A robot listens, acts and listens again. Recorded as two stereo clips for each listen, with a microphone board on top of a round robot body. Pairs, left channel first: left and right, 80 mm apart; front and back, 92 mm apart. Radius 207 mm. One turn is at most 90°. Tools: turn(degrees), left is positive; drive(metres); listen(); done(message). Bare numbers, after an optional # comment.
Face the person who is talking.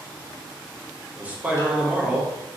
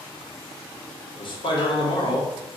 # The man speaking: 20° right.
turn(-20)
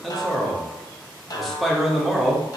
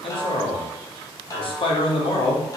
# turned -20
done("Found it: a man speaking, straight ahead, 1 to 2 m away.")